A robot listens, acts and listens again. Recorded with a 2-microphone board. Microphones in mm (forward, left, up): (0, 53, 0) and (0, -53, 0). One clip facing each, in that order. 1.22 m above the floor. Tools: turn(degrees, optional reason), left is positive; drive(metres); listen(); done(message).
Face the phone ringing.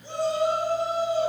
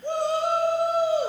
listen()
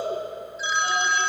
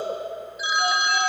turn(degrees=-30)
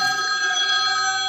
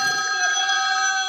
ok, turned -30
turn(degrees=15, reason="So it is at 15° left.")
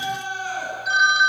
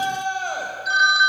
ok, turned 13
done("Facing the phone ringing.")